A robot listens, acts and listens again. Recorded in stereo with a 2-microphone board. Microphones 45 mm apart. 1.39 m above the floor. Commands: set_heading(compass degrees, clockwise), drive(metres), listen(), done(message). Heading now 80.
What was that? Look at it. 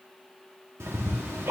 set_heading(150)
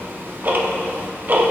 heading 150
set_heading(190)
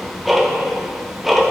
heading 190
done("Found it: ticking, straight ahead.")